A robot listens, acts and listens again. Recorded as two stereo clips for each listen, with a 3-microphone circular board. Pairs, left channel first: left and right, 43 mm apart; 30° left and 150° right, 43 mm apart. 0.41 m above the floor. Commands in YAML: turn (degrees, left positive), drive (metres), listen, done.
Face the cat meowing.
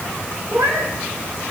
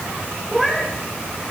turn: -70
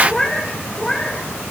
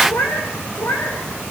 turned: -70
turn: 15
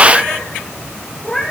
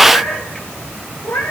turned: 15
turn: 10
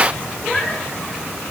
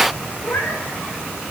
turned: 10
done: "Facing the cat meowing."